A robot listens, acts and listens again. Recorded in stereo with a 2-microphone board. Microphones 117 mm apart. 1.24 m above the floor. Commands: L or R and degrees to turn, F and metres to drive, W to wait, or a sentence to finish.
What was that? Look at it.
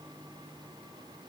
W
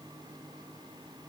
W
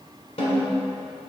L60
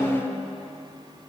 Facing the snare drum.